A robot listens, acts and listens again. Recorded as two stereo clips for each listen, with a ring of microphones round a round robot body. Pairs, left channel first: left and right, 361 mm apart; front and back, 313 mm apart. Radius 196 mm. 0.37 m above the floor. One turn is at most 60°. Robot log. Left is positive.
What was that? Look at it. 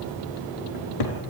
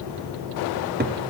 note: The cupboard door: 120° left.
cmd yaw +60
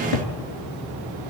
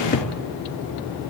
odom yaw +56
note: The cupboard door is now 65° left.
cmd yaw +60
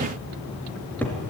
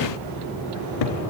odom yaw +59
end: Found it: a cupboard door, straight ahead, 2 to 4 m away.